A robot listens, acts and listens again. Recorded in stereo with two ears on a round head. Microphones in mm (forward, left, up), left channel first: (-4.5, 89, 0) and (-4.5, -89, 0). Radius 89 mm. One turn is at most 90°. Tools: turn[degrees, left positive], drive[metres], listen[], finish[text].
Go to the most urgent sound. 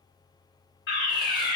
Thought: The fire alarm: about 55° left or 125° left.
Action: turn[55]
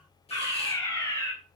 Thought: So it is at 20° left.
Action: turn[20]
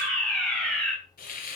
Action: drive[1.0]
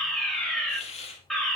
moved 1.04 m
Action: drive[1.0]
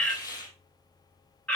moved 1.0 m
Thought: The fire alarm is now 10° left.
Action: turn[10]
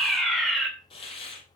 Action: drive[1.0]
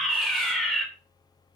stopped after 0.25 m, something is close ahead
Action: finish[I am next to the fire alarm.]